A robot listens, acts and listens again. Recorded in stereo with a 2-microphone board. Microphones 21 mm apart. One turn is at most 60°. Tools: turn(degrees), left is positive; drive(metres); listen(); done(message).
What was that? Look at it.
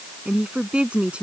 turn(degrees=-60)
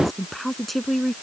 done("Facing the woman speaking.")